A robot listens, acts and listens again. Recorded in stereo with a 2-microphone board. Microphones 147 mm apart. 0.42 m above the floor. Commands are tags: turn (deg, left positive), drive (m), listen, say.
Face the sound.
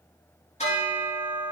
<turn deg="50"/>
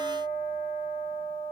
<turn deg="80"/>
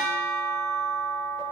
<say>Facing the bell, over 4 m away.</say>